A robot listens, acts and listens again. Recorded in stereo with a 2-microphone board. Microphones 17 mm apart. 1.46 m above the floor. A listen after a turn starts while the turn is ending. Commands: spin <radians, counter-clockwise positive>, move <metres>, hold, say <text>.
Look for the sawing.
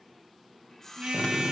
spin 0.44
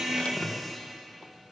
hold
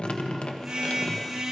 hold
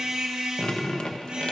say I heard sawing, but can't make it out now. It was about straight ahead or 130° left.